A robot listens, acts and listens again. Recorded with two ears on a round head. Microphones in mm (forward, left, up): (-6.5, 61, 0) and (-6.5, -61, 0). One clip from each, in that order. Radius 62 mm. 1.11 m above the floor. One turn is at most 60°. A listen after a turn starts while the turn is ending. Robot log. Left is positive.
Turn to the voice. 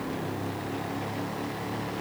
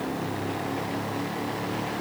cmd idle
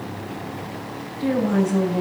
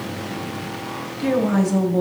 note: The woman speaking: about 55° right or 125° right.
cmd yaw -55
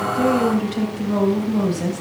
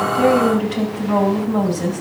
end: Found it: a woman speaking, straight ahead.